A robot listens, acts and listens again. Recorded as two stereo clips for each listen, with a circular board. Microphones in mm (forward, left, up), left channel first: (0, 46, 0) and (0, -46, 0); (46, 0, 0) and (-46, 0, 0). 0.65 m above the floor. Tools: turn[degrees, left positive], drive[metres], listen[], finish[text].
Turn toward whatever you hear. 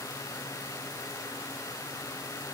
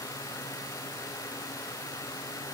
Action: listen[]
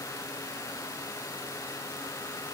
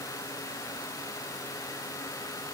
Action: listen[]
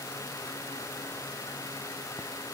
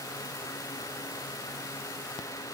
Action: finish[I can't make out anything.]